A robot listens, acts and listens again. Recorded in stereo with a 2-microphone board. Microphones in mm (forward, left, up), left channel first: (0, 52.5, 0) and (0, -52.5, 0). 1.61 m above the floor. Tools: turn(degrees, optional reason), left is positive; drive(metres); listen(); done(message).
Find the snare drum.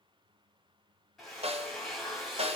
turn(degrees=-75, reason="The snare drum: about 75° right or 105° right.")
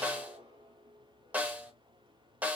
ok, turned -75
turn(degrees=-15, reason="So it is at 15° right.")
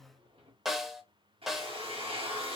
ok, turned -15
done("Facing the snare drum, under 1 m away.")